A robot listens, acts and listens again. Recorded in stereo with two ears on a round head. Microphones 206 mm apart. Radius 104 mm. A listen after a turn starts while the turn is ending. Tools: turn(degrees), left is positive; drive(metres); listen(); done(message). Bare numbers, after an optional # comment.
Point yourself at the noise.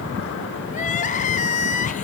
# The crying: about 30° left or 150° left.
turn(30)
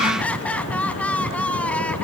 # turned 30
done("Found it: crying, straight ahead.")